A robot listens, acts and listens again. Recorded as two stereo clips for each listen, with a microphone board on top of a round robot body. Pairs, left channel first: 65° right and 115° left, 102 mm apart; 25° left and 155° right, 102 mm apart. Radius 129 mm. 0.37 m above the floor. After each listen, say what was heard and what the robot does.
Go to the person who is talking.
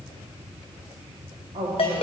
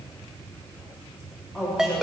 The woman speaking: 115° left. Turn 115° left.
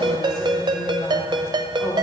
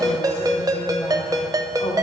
Keep listening.
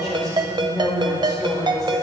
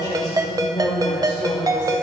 The woman speaking is now 20° right. Turn 20° right.
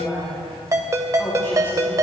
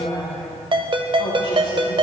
Drive 1.0 m forward.
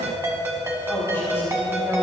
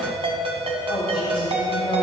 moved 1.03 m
Keep listening.
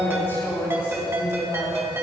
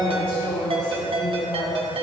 Drive 1.0 m forward.
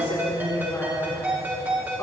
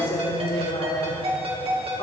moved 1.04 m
Drive 1.0 m forward.
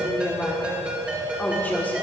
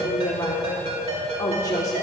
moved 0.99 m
Drive 1.0 m forward.
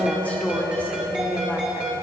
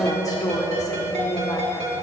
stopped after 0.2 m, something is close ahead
Arrived at the woman speaking, straight ahead.